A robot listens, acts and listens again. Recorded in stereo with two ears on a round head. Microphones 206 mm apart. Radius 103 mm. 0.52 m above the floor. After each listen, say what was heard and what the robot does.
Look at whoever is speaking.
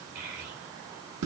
The child speaking: about 40° right or 140° right. Turn 40° right.
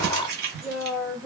Facing the child speaking, under 1 m away.